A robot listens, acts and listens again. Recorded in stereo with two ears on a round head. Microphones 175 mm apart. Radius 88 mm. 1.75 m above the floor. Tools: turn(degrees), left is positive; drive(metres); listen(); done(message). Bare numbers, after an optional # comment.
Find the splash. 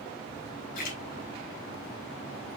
# The splash: about 45° left or 135° left.
turn(45)
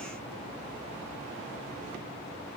listen()
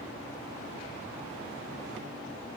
done("I heard a splash, but can't make it out now. It was about straight ahead or 90° left.")